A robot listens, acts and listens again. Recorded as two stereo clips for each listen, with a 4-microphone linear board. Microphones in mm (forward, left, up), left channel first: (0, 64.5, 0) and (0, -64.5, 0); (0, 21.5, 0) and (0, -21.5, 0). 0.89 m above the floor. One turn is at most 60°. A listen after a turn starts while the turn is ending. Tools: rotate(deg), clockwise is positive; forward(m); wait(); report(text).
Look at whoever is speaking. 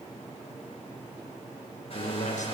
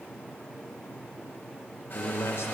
rotate(-60)
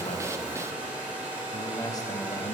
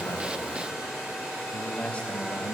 rotate(-30)
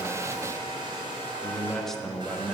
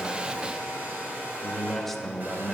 report("Found it: a man speaking, straight ahead, 1 to 2 m away.")